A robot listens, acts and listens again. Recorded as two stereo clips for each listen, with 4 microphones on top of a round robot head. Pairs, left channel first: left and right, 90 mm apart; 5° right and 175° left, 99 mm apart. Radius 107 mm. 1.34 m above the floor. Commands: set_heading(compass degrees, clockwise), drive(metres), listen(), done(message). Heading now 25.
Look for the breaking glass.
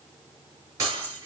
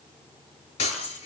set_heading(50)
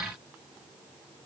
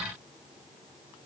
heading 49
done("I heard breaking glass from this way, but can't make it out now.")